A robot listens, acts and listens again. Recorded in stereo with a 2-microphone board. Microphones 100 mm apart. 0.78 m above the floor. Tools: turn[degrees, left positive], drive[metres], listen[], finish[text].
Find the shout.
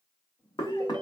Action: listen[]
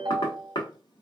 Action: listen[]
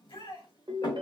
Thought: The shout: about 65° left or 115° left.
Action: turn[65]
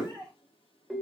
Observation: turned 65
Thought: So it is at 10° left.
Action: turn[10]
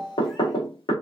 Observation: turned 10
Action: listen[]
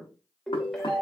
Action: listen[]
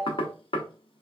Action: finish[Facing where the shout came from. I can't hear it now.]